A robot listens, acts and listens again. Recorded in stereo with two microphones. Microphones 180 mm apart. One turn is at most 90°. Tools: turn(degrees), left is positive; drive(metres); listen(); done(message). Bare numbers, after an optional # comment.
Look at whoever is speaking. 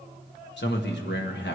turn(90)
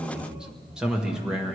done("Facing the man speaking.")